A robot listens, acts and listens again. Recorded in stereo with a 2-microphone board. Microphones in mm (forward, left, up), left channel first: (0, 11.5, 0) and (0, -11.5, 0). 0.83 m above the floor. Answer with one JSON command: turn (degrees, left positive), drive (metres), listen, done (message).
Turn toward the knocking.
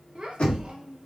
{"turn": 70}
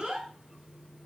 {"listen": true}
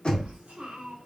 {"turn": 40}
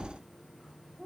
{"listen": true}
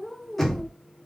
{"done": "Found it: knocking, straight ahead, 1 to 2 m away."}